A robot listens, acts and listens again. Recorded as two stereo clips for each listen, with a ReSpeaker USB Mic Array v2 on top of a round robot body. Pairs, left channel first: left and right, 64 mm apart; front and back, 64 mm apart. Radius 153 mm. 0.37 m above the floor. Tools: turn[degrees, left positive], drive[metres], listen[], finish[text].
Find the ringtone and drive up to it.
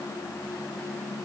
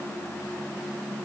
Action: listen[]
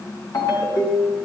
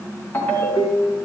Thought: The ringtone: 60° left.
Action: turn[60]
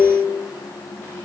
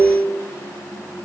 Thought: The ringtone is now 15° left.
Action: turn[15]
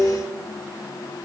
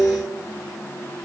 Action: drive[1.0]
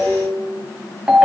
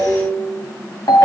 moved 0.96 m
Thought: The ringtone is now 15° right.
Action: turn[-15]
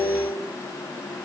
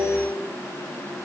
Action: drive[1.0]
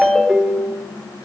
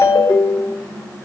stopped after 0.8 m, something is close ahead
Action: finish[I am next to the ringtone.]